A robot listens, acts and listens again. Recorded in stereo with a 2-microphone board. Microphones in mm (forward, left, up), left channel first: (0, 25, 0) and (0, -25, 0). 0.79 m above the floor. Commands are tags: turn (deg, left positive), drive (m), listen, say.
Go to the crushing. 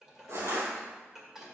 <turn deg="-70"/>
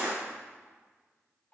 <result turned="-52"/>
<turn deg="-25"/>
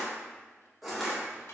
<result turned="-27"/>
<drive m="1.0"/>
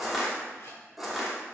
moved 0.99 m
<drive m="1.0"/>
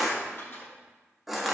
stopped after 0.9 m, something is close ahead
<say>I am next to the crushing.</say>